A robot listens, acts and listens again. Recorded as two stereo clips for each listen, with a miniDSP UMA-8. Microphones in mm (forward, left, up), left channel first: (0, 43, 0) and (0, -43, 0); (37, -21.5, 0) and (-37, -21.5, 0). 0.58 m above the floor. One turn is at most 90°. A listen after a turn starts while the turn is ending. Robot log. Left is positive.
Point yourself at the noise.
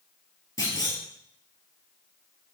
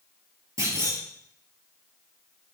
note: The clunk: 140° left.
cmd yaw +90
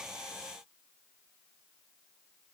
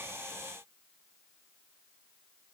note: Nothing new. It was at 50° left.
cmd yaw +50
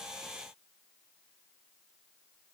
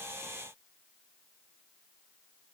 end: I heard a clunk from this way, but can't make it out now.